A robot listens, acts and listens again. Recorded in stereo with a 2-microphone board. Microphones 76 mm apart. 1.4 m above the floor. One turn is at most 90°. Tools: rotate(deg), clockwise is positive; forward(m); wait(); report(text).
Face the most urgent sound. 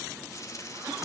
wait()
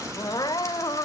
rotate(-60)
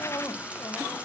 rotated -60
rotate(-55)
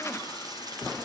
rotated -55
wait()
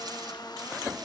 wait()
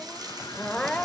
rotate(-15)
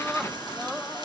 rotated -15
report("Facing the crying, 1 to 2 m away.")